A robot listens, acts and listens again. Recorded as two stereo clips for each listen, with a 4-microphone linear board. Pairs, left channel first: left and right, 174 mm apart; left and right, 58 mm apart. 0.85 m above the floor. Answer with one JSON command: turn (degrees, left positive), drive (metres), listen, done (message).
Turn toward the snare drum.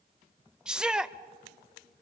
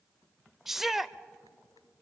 {"listen": true}
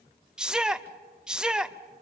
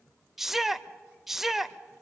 {"listen": true}
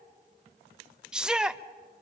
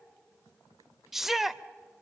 {"done": "I can't make out a snare drum, only a shout."}